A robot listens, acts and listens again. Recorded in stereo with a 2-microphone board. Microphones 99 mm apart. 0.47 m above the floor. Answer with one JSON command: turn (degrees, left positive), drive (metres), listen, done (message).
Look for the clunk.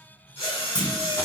{"turn": 50}
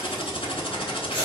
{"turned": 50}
{"listen": true}
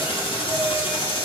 {"done": "I heard a clunk, but can't make it out now. It was about straight ahead or 80° left."}